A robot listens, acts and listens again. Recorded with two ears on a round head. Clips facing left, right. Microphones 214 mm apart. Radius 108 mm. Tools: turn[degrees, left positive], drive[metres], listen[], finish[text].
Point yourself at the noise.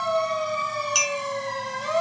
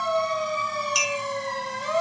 Thought: The clink: about 60° left or 120° left.
Action: turn[60]
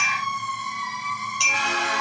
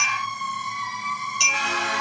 Action: finish[Found it: a clink, straight ahead.]